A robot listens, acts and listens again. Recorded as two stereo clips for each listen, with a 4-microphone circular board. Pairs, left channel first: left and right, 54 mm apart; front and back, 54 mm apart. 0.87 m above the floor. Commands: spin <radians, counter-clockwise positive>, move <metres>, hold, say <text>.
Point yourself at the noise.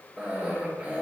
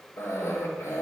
spin -0.35
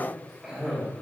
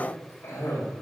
say Facing the cough.